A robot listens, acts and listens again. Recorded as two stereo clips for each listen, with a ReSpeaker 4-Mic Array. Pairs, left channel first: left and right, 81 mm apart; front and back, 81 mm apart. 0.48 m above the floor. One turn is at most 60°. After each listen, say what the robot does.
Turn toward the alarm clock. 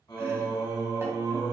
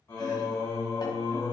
Keep listening.
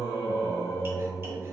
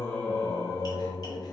Keep listening.
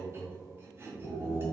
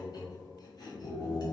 I can't make out an alarm clock, only chopping and singing.